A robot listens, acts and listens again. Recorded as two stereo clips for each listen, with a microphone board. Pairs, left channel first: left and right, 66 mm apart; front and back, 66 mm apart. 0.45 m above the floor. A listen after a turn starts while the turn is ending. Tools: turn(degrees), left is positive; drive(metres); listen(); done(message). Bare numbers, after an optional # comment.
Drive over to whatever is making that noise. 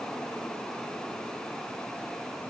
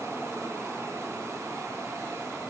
listen()
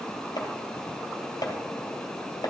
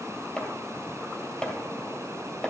# The chopping: 75° left.
turn(75)
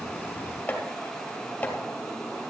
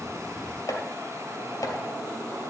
# The chopping is now 20° left.
turn(20)
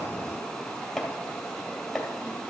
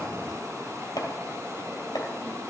drive(1.0)
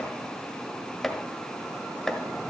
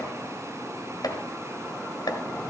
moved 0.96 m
drive(1.0)
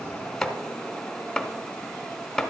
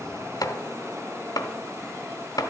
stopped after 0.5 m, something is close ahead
done("Arrived at the chopping, straight ahead.")